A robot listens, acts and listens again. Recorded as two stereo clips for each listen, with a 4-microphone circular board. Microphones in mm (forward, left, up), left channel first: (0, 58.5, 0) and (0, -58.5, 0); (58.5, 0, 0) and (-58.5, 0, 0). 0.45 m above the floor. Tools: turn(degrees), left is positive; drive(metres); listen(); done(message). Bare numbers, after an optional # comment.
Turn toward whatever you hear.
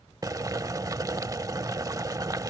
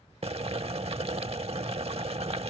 # The boiling: 150° right.
turn(-150)
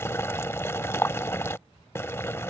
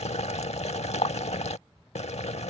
# The boiling is now 20° left.
turn(20)
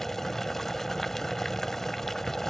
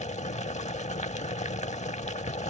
done("Found it: boiling, straight ahead.")